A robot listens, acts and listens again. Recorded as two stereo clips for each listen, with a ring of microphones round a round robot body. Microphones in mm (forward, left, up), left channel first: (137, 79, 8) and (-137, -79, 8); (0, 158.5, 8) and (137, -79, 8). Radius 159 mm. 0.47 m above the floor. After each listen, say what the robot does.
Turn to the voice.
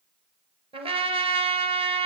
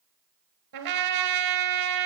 Keep listening.
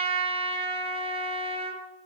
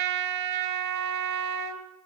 Keep listening.
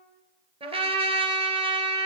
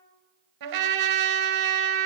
I can't make out anyone speaking, only a trumpet.